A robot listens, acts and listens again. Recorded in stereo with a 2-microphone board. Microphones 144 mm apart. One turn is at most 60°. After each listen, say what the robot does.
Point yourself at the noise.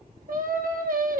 Turn 60° right.
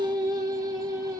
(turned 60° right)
Turn 25° right.
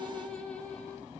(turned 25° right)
Turn 10° left.
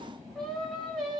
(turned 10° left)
Found it: singing, straight ahead.